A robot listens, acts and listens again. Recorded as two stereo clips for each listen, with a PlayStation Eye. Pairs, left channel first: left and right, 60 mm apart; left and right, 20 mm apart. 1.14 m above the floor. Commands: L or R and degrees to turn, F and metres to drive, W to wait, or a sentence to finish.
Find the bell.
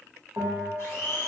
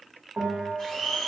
R55
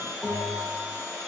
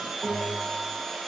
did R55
Facing the bell.